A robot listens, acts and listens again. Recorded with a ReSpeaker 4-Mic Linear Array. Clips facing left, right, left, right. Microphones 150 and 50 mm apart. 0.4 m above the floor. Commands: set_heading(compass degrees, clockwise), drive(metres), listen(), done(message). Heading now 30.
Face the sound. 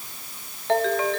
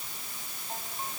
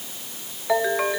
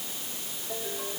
set_heading(300)
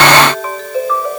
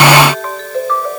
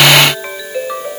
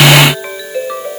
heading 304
done("Facing the ringtone.")